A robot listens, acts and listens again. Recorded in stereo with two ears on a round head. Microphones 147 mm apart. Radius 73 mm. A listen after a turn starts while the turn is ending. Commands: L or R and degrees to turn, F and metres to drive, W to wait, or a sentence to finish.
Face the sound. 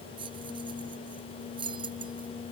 R30
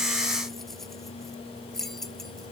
Facing the keys jangling.